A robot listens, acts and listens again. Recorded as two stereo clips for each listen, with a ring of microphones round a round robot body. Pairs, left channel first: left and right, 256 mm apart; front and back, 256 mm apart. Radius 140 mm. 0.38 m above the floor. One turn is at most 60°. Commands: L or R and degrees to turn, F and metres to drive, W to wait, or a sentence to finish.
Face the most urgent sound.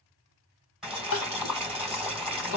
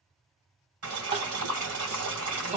L60
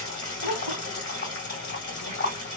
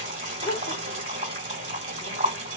L55
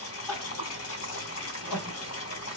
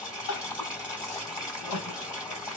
Facing the crying, 1 to 2 m away.